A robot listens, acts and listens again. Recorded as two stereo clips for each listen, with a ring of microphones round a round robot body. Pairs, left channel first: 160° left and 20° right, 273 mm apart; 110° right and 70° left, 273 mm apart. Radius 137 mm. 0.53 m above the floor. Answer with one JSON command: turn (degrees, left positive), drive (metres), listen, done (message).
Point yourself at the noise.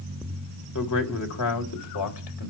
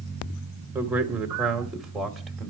{"turn": 155}
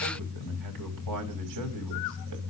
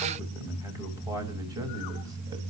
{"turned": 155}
{"turn": -10}
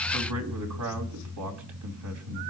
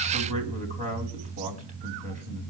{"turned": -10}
{"done": "Facing the man speaking."}